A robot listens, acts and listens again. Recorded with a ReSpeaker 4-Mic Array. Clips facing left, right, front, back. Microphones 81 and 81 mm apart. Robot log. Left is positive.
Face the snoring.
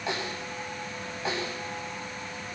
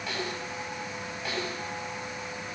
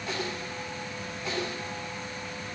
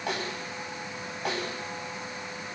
cmd idle
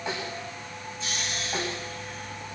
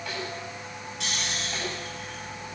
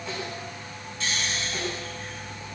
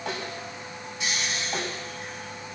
note: The snoring: 105° right.
cmd yaw -105
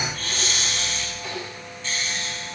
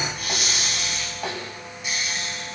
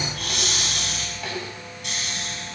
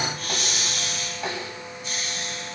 note: The snoring is now 15° right.
cmd yaw -15
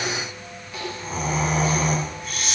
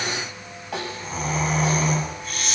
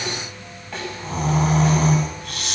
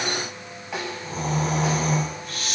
end: Facing the snoring, over 4 m away.